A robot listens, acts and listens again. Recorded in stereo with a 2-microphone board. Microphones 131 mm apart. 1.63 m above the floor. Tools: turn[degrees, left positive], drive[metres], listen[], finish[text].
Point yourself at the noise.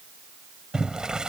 Action: turn[-30]
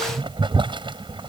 Thought: So it is at 140° right.
Action: turn[-140]
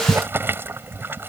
Thought: The boiling is now 15° right.
Action: turn[-15]
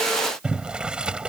Action: finish[Facing the boiling.]